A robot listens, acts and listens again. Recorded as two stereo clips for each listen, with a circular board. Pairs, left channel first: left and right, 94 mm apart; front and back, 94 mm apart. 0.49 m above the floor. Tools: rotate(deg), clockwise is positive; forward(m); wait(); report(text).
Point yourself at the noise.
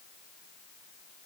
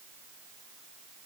wait()
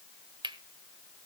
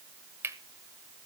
rotate(115)
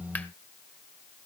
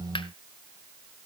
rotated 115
wait()
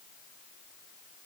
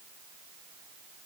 wait()
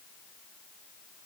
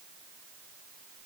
rotate(-20)
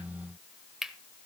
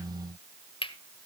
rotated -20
report("Facing the cutlery clinking, 1 to 2 m away.")